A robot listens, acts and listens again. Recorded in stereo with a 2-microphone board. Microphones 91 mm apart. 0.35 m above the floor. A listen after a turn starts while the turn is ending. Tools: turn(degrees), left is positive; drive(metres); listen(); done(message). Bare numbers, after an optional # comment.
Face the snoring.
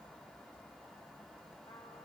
listen()
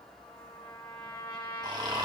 # The snoring: about 50° right or 130° right.
turn(-50)
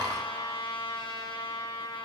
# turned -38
listen()
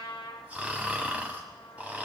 # So it is at 15° right.
turn(-15)
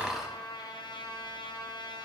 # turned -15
done("Found it: snoring, straight ahead, 1 to 2 m away.")